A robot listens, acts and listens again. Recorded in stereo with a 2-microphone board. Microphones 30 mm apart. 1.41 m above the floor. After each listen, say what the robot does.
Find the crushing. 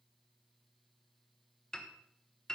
Keep listening.
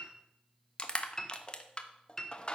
Turn 35° left.
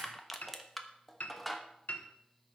Found it: crushing, straight ahead, 1 to 2 m away.